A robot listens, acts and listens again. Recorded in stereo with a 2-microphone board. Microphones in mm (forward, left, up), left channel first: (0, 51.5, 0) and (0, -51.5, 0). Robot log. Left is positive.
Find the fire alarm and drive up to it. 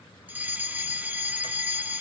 note: The fire alarm: about 15° right or 165° right.
cmd yaw -15
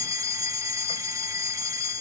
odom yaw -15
note: So it is at 150° right.
cmd yaw -150
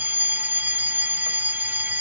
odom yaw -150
note: The fire alarm is now 20° right.
cmd yaw -20
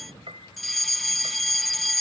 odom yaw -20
cmd fwd 1.0
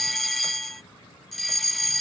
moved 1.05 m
cmd fwd 1.0
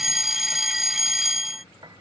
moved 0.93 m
cmd fwd 1.0
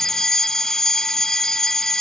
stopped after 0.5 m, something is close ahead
end: Arrived at the fire alarm, straight ahead.